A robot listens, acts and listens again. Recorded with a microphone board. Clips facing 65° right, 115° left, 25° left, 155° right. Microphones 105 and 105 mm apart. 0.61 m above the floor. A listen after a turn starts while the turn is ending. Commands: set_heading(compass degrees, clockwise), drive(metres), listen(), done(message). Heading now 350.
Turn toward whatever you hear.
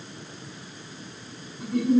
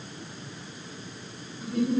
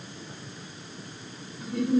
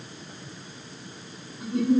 set_heading(95)
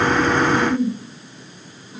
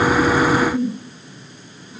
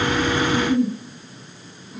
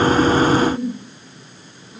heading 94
done("Facing the giggle.")